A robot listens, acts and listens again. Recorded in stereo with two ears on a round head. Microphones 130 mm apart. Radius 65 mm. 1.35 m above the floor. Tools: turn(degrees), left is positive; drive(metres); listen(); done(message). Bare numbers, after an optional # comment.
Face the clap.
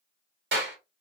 turn(-90)
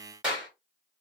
done("Found it: a clap, straight ahead, 2 to 4 m away.")